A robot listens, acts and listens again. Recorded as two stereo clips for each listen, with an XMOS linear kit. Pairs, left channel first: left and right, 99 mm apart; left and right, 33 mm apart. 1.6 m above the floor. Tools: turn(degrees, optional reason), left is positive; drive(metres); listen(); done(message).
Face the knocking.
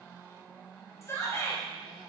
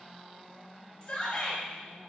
listen()
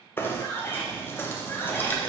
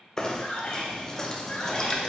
turn(degrees=20, reason="The knocking: about 20° left or 160° left.")
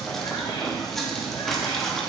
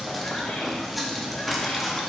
done("Facing the knocking, under 1 m away.")